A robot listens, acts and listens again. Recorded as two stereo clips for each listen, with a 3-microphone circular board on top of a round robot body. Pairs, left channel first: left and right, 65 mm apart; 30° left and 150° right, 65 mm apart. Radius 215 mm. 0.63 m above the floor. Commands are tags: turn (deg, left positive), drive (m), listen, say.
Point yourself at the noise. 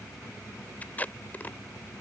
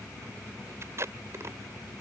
<turn deg="155"/>
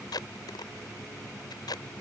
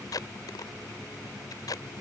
<turn deg="65"/>
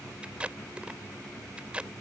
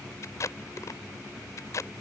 <turn deg="-15"/>
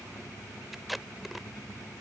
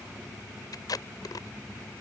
<say>Found it: tape being pulled, straight ahead.</say>